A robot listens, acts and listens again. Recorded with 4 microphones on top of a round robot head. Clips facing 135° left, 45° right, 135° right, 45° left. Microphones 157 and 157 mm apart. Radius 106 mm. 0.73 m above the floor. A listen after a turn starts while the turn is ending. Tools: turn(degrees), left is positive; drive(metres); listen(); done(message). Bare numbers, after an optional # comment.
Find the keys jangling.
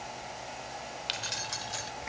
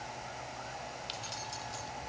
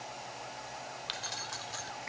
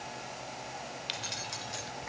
# The keys jangling: 115° left.
turn(115)
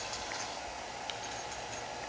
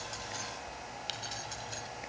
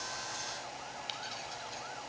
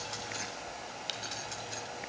done("Found it: keys jangling, straight ahead.")